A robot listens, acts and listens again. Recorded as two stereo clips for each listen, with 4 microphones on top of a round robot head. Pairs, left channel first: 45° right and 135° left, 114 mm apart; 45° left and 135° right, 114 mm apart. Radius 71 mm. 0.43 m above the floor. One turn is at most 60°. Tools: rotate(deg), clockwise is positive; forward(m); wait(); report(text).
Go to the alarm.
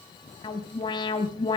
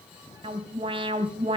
rotate(60)
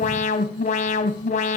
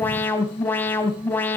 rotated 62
rotate(30)
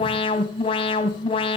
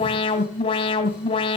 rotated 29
forward(1.0)
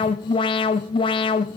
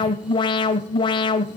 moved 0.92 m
forward(1.0)
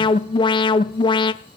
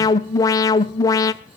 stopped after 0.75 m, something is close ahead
rotate(10)
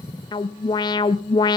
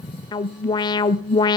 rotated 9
report("Arrived at the alarm, straight ahead.")